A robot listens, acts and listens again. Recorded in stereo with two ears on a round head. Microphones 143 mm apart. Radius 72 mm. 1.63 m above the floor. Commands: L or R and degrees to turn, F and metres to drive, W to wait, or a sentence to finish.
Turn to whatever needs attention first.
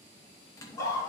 L20
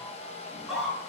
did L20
Found it: a scream, straight ahead, over 4 m away.